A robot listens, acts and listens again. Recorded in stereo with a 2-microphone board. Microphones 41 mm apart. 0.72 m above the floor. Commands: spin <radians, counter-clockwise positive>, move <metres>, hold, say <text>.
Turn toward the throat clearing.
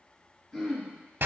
spin 0.44
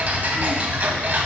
hold
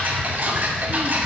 hold
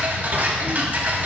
say I heard throat clearing, but can't make it out now. It was about straight ahead or 130° left.